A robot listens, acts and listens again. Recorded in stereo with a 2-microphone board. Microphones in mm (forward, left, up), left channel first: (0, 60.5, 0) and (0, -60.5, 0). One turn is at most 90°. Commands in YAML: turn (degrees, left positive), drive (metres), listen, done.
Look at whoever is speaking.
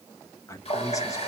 turn: 25
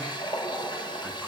listen: true
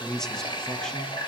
done: "Facing the man speaking, 1 to 2 m away."